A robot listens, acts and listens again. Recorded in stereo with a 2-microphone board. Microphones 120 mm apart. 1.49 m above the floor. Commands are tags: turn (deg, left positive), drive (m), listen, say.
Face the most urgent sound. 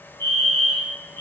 <turn deg="-35"/>
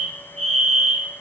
<turn deg="-105"/>
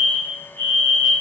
<turn deg="20"/>
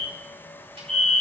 <say>Found it: a fire alarm, straight ahead.</say>